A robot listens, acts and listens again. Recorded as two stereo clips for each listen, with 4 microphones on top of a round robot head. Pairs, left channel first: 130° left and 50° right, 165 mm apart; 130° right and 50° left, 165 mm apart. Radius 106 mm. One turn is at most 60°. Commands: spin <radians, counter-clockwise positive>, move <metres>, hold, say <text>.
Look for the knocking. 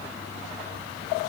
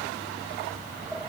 hold
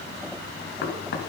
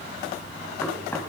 spin 1.05
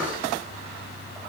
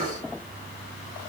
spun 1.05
spin 1.05
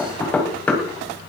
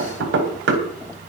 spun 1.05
spin 0.87
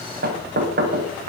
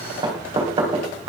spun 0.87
spin -0.26
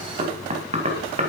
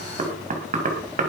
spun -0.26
say Facing the knocking.